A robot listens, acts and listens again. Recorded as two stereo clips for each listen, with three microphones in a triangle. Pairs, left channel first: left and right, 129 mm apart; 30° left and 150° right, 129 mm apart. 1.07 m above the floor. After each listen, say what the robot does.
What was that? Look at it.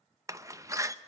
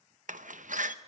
Turn 155° right.
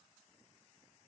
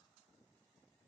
I heard a door slam from this way, but can't make it out now.